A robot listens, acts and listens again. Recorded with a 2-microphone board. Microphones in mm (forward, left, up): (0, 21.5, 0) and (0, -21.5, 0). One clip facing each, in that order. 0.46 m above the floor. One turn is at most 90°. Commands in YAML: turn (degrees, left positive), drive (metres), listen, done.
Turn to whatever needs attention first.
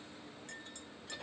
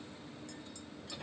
listen: true
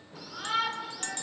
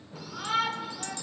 turn: -25
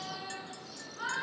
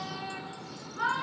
turn: -90
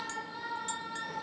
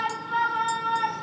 turn: -65
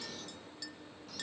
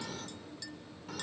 turn: -25
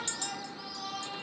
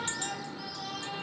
turn: 10
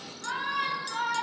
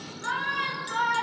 done: "Facing the shout, over 4 m away."